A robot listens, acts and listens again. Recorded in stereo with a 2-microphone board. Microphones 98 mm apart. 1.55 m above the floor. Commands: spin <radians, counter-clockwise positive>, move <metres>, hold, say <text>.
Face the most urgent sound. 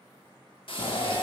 spin 1.57
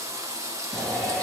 say Found it: a shout, straight ahead.